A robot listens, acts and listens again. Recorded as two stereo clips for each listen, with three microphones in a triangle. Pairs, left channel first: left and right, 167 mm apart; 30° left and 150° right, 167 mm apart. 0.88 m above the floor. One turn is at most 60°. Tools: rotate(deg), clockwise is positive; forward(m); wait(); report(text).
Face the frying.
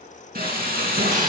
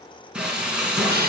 rotate(60)
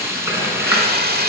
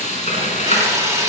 rotate(15)
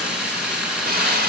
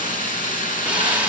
report("Facing the frying.")